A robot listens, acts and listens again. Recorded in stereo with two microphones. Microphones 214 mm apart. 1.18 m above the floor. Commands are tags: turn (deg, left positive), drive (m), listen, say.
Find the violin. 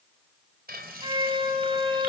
<turn deg="-20"/>
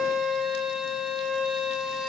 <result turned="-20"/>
<say>Facing the violin.</say>